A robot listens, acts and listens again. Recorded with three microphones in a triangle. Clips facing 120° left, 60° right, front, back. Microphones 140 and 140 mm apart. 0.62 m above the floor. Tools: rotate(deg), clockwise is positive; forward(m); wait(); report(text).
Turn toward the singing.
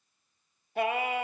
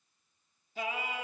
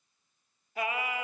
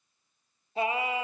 rotate(-125)
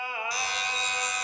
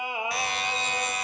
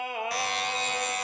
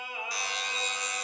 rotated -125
rotate(-10)
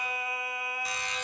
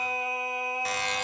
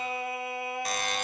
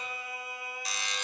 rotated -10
report("Found it: singing, straight ahead.")